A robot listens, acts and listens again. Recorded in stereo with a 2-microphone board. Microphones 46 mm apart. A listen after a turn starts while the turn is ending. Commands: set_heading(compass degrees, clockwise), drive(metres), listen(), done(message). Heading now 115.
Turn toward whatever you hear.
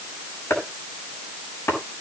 set_heading(25)
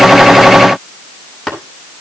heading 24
done("Facing the chopping, over 4 m away.")